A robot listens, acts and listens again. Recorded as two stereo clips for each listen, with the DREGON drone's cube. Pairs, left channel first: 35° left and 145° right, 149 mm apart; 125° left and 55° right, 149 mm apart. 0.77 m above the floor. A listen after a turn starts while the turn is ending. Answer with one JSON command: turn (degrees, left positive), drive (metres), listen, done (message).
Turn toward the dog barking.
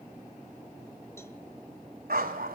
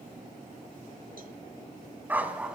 {"turn": -140}
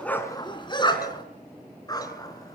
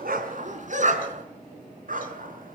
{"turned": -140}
{"turn": -30}
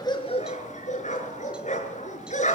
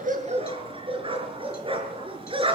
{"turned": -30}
{"done": "Facing the dog barking."}